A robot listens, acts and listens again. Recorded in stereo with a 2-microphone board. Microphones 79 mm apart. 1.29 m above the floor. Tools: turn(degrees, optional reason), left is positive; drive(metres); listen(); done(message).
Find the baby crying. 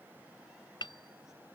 listen()
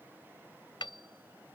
listen()
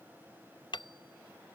done("I can't make out a baby crying, only hammering.")